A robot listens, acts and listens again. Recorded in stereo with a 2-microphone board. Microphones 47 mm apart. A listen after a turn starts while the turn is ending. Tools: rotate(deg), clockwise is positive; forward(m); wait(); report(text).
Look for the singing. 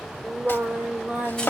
rotate(35)
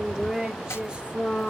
rotate(30)
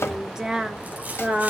rotate(35)
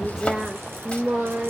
rotate(35)
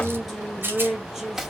rotate(10)
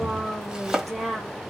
report("Found it: singing, straight ahead, 2 to 4 m away.")